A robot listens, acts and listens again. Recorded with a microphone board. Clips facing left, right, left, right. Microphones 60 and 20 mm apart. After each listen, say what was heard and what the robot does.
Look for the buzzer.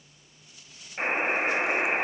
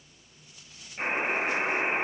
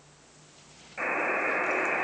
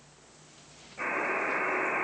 The buzzer: about 35° left or 145° left. Turn 35° left.
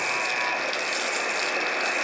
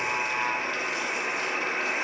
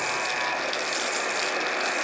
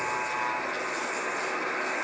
So it is at 115° left. Turn 115° left.
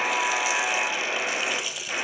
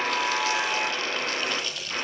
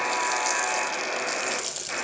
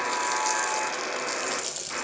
The buzzer is now 55° left. Turn 55° left.
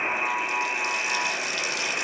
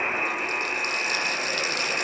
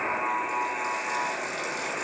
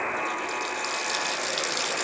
Facing the buzzer, over 4 m away.